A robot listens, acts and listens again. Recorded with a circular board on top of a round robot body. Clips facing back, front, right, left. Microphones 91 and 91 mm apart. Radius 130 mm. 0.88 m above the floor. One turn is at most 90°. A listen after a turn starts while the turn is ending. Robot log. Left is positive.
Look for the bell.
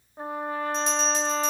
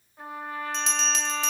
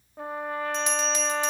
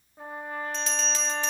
note: The bell: 15° right.
cmd yaw -15
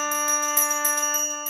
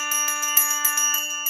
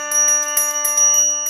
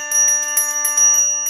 end: Facing the bell.